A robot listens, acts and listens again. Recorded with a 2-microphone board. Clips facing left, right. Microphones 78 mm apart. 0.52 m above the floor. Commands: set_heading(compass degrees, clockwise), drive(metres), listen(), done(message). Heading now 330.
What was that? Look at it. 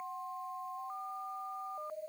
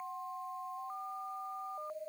listen()
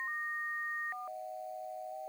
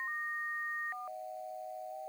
listen()
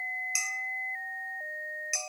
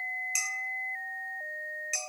set_heading(300)
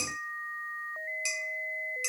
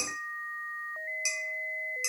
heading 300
set_heading(320)
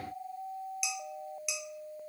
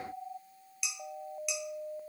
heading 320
done("Facing the dishes clattering, under 1 m away.")